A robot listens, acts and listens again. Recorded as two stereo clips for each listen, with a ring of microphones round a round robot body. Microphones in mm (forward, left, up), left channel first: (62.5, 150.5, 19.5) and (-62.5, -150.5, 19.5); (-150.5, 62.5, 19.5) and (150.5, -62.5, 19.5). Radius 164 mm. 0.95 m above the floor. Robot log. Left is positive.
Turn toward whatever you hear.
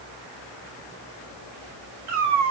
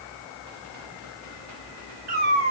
note: The cat meowing: 80° right.
cmd yaw -80
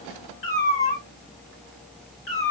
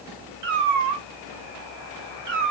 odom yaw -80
end: Facing the cat meowing.